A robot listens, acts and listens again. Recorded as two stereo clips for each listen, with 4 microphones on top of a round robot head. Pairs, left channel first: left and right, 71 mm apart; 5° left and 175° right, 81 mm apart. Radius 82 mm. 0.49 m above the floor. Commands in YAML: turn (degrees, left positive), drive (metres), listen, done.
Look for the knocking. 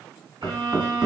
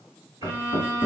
turn: -20
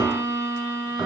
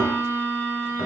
listen: true
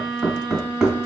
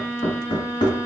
turn: -10
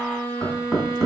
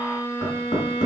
done: "Found it: knocking, straight ahead, 2 to 4 m away."